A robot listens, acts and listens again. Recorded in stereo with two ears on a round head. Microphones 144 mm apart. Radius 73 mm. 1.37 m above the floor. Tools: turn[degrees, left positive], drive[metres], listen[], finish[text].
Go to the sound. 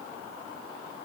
Action: listen[]
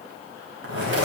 Action: turn[-90]
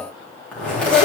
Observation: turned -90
Action: drive[1.0]
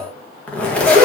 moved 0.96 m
Action: drive[1.0]
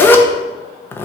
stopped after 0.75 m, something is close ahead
Thought: The zipper is now 15° left.
Action: turn[15]
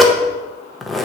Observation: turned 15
Action: finish[I am next to the zipper.]